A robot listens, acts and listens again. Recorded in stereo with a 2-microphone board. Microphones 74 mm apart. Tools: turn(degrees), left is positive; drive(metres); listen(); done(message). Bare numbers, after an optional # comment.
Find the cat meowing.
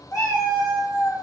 # The cat meowing: about 50° left or 130° left.
turn(50)
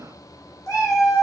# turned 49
# So it is at 65° left.
turn(65)
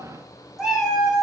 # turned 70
done("Found it: a cat meowing, straight ahead, 1 to 2 m away.")